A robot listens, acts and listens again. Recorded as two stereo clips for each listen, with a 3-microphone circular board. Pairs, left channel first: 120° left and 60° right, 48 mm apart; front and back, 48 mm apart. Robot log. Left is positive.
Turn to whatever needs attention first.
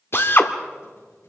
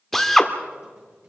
cmd idle
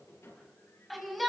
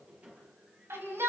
note: The shout: 150° right.
cmd yaw -150
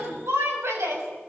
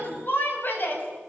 note: The shout is now 40° right.
cmd yaw -40
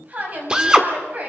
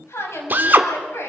end: Found it: a shout, straight ahead.